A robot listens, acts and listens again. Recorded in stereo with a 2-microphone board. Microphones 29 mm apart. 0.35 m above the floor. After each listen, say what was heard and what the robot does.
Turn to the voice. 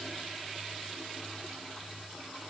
Keep listening.
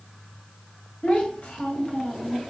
The child speaking: about 60° left or 120° left. Turn 60° left.
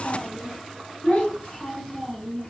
So it is at 50° left. Turn 50° left.
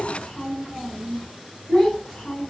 The child speaking is now 20° left. Turn 20° left.
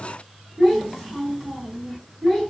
Facing the child speaking.